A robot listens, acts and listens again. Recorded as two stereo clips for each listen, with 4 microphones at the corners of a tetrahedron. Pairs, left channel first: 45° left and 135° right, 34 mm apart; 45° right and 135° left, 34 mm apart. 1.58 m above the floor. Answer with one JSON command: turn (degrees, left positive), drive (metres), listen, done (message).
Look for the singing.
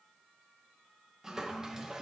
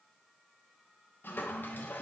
{"listen": true}
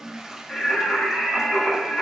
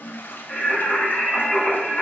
{"turn": -15}
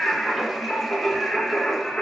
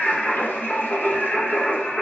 {"done": "Found it: singing, straight ahead."}